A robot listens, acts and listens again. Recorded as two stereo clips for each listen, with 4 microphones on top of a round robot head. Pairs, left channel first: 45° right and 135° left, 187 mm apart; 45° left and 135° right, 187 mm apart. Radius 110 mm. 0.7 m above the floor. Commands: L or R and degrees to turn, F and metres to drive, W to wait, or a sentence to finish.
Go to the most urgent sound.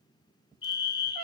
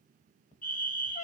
L20
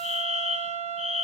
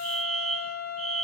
F1.0
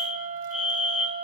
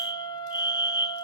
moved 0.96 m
F1.0
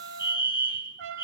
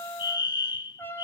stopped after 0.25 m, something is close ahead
I am next to the fire alarm.